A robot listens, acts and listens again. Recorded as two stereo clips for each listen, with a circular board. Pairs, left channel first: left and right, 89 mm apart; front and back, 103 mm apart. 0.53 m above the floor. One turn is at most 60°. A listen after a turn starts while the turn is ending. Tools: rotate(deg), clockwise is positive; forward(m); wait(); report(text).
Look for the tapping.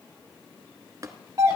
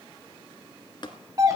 rotate(40)
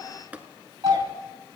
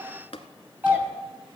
rotate(15)
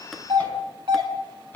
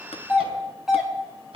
wait()
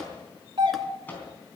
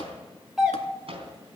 wait()
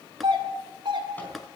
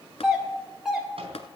report("Facing the tapping, 1 to 2 m away.")